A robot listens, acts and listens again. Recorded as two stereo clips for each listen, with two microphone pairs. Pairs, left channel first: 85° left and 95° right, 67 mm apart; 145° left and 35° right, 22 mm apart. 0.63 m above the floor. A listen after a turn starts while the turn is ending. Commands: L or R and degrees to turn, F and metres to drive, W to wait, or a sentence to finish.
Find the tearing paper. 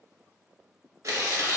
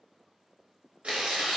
R60
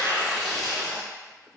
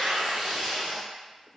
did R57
Facing the tearing paper, under 1 m away.